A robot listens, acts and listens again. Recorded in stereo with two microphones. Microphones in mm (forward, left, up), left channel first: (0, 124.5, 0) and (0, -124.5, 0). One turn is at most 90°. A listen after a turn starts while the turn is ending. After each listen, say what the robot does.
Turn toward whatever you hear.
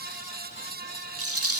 Turn 65° right.
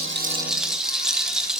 Found it: a rattle, straight ahead, 1 to 2 m away.